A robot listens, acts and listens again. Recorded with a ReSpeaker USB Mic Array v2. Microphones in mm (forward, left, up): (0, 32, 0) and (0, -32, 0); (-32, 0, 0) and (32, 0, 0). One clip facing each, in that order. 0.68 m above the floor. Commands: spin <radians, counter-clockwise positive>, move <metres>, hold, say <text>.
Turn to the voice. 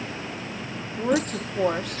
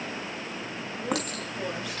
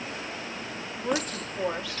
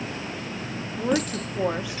spin 1.22
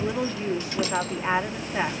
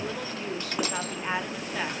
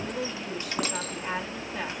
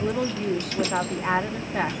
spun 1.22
spin 0.44
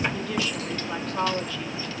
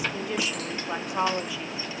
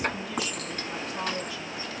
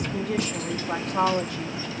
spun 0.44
spin -0.26
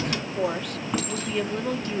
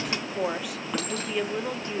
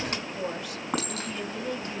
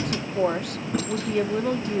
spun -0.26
say Found it: a woman speaking, straight ahead.